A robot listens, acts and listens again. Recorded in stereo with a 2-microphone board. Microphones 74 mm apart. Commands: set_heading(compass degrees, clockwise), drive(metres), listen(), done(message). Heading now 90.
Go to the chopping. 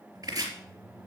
set_heading(140)
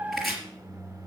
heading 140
drive(1.0)
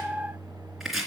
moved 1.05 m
drive(1.0)
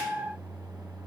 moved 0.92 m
listen()
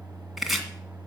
drive(1.0)
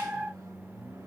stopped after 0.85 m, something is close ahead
listen()
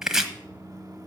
set_heading(150)
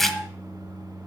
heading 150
done("Arrived at the chopping, straight ahead.")